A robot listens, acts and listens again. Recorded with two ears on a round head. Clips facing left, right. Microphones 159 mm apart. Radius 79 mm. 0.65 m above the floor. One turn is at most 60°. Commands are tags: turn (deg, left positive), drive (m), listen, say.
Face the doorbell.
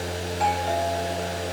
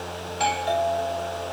<turn deg="-50"/>
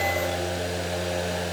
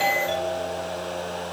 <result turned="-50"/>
<listen/>
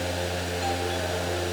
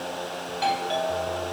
<turn deg="-60"/>
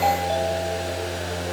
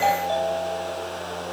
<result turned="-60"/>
<turn deg="-20"/>
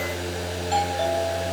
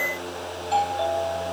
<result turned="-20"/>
<listen/>
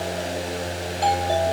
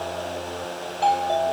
<turn deg="15"/>
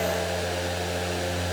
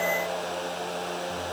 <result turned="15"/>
<listen/>
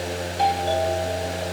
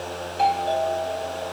<turn deg="10"/>
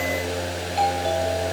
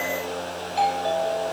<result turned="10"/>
<say>Found it: a doorbell, straight ahead.</say>